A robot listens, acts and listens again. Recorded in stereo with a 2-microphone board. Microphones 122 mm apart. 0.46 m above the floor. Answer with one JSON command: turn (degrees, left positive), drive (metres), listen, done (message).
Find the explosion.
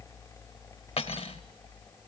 {"listen": true}
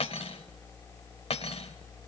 {"listen": true}
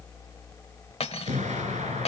{"turn": -90}
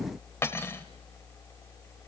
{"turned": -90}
{"done": "I heard an explosion from this way, but can't make it out now."}